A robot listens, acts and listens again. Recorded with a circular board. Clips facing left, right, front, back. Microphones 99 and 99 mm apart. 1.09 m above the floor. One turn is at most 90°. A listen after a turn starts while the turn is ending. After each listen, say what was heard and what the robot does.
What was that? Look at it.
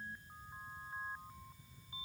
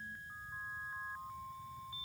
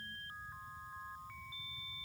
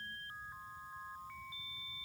Keep listening.
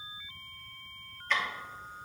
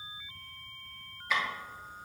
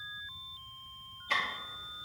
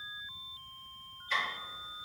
The ticking: 10° right. Turn 10° right.
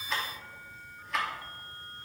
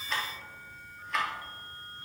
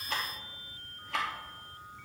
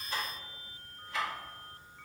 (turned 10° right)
Found it: ticking, straight ahead.